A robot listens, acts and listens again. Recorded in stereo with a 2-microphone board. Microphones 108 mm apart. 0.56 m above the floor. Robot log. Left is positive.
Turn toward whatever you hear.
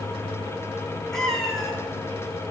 cmd yaw +30
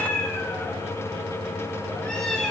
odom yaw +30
cmd yaw +30
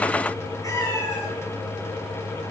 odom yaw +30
note: So it is at 150° left.
cmd yaw +150
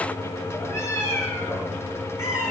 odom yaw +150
note: The cat meowing is now 25° left.
cmd yaw +25
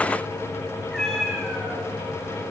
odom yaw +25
end: Facing the cat meowing, 2 to 4 m away.